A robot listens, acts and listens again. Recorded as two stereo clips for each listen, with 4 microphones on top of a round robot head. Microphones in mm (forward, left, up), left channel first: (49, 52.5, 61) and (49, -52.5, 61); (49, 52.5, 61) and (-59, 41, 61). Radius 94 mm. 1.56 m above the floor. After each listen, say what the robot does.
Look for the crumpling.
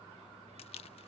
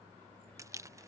Turn 125° left.
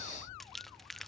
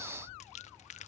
Keep listening.
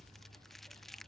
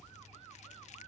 Keep listening.
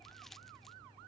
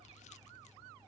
Facing where the crumpling came from. I can't hear it now.